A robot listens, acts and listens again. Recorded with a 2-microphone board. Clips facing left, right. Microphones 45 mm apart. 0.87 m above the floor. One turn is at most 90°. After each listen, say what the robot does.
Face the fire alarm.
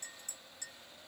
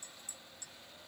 Keep listening.
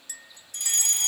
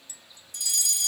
Turn 50° left.
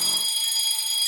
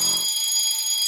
Found it: a fire alarm, straight ahead.